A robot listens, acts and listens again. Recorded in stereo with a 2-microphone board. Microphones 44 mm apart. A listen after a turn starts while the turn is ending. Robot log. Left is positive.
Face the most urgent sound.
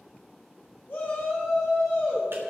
note: The shout: about 45° left or 135° left.
cmd yaw +45
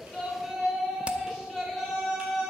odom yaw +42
end: Found it: a shout, straight ahead.